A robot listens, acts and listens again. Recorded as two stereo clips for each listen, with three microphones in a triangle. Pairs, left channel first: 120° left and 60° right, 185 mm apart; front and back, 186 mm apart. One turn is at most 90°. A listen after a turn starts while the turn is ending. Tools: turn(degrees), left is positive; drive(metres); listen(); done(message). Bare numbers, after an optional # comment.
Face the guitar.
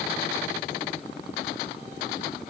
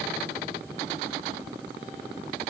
listen()
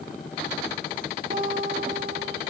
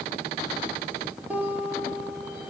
# The guitar: 100° right.
turn(-90)
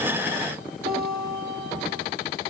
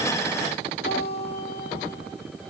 # The guitar is now 25° right.
turn(-25)
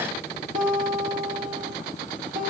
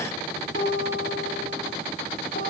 # The guitar is now 20° right.
turn(-20)
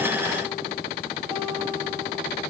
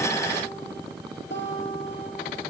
done("Facing the guitar.")